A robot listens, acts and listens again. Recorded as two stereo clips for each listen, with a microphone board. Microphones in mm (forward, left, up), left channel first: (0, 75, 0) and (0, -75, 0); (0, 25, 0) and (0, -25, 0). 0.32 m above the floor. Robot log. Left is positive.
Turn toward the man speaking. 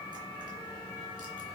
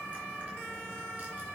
cmd idle
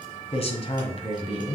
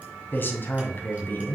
note: The man speaking: about 45° left or 135° left.
cmd yaw +45
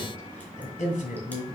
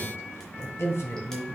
note: So it is at 80° left.
cmd yaw +80
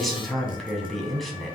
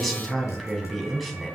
end: Facing the man speaking, 2 to 4 m away.